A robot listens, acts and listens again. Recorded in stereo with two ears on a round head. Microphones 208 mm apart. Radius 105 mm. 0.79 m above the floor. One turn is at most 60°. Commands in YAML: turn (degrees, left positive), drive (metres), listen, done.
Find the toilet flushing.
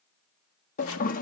turn: 35
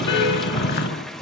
done: "Found it: a toilet flushing, straight ahead."